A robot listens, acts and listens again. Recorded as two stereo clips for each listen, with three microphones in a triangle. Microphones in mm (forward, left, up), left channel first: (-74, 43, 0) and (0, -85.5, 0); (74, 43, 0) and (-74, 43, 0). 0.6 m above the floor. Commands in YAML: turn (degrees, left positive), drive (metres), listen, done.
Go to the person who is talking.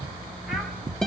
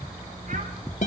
listen: true
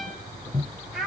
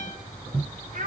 turn: -150
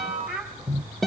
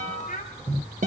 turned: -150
turn: 25
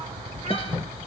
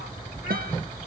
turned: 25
listen: true
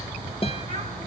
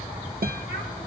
listen: true
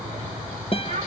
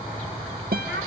done: "I heard a child speaking from this way, but can't make it out now. I did not reach it."